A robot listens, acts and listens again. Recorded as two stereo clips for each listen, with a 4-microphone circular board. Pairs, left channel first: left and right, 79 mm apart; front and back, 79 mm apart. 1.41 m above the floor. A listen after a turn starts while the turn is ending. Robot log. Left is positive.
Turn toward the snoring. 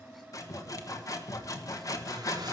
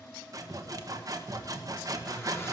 cmd idle
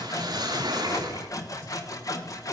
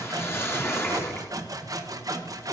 cmd idle
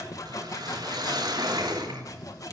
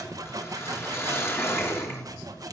note: The snoring: 30° left.
cmd yaw +30
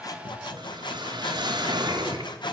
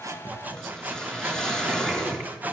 cmd idle
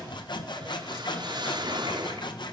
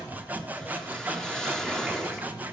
cmd idle
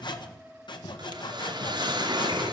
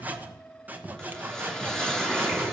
end: Facing the snoring.